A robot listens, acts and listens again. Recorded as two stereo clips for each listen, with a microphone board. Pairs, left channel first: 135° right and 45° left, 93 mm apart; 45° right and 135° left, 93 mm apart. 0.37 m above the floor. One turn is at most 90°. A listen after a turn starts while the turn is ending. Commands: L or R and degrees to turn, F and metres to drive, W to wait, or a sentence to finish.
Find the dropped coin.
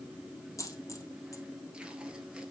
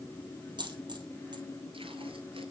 L90
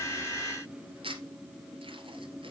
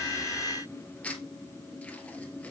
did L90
L80
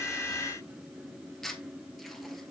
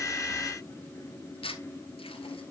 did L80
Facing where the dropped coin came from. I can't hear it now.